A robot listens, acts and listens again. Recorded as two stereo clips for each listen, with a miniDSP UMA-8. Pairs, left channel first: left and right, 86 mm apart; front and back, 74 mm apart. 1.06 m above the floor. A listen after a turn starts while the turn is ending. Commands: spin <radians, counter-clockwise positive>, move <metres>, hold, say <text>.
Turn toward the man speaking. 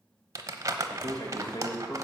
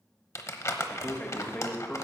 spin 1.22
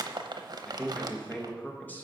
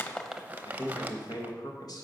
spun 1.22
spin 0.44
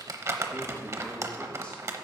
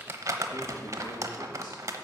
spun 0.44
say Facing the man speaking.